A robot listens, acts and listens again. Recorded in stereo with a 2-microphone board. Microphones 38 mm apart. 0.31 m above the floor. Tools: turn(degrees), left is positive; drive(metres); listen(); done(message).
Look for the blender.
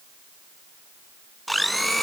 turn(degrees=30)
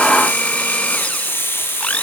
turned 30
turn(degrees=145)
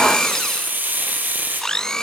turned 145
turn(degrees=15)
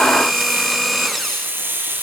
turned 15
done("Found it: a blender, straight ahead, under 1 m away.")